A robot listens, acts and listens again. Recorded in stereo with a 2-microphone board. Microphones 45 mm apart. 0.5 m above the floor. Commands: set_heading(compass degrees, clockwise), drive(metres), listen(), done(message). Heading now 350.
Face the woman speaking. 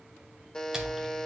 listen()
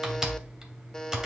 listen()
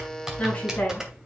set_heading(320)
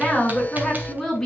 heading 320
set_heading(310)
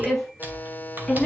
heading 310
set_heading(300)
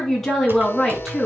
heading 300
done("Found it: a woman speaking, straight ahead.")